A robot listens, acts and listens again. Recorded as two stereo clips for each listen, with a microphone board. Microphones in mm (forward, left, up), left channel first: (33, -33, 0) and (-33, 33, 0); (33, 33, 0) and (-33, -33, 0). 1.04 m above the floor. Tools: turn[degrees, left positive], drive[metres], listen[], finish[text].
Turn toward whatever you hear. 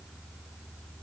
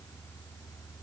Action: listen[]
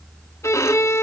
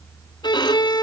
Thought: The violin: 10° left.
Action: turn[10]
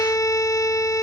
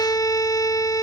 Action: finish[Facing the violin.]